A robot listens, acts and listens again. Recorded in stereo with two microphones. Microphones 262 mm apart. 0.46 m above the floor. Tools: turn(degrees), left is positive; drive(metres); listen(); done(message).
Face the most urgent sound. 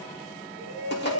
turn(degrees=70)
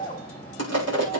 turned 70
turn(degrees=30)
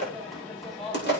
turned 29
done("Found it: a shout, straight ahead.")